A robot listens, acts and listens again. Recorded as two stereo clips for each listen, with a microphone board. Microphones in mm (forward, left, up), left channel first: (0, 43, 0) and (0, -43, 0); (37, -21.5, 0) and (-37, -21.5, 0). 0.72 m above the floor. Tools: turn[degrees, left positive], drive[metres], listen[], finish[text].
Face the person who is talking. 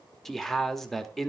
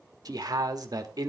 Thought: The man speaking: 175° left.
Action: turn[175]
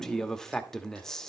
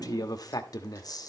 Action: finish[Facing the man speaking, 1 to 2 m away.]